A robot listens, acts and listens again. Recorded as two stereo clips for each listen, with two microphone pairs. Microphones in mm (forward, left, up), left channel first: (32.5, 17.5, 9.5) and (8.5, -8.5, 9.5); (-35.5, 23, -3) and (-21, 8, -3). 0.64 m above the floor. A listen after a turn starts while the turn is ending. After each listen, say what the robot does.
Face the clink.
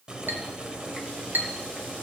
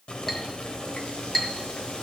Turn 145° right.
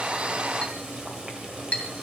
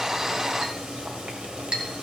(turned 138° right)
Found it: a clink, straight ahead.